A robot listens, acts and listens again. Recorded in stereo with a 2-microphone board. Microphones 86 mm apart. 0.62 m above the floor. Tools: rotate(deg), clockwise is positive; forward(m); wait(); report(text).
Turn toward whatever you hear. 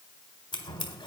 rotate(-75)
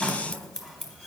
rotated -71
report("Found it: scissors, straight ahead, 1 to 2 m away.")